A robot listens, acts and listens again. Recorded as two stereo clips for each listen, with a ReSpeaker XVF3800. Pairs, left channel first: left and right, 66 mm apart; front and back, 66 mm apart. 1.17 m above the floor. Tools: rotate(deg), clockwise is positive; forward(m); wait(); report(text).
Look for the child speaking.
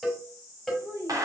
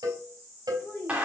rotate(60)
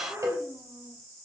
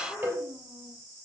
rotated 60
wait()
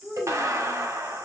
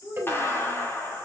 rotate(10)
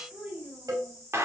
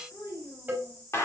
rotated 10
report("Found it: a child speaking, straight ahead, over 4 m away.")